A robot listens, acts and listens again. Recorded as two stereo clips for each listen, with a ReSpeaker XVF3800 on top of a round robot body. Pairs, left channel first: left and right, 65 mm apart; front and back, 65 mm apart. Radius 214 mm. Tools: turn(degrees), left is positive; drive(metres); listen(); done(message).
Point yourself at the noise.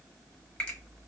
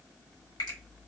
turn(degrees=15)
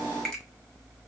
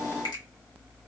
done("Facing the finger snap, under 1 m away.")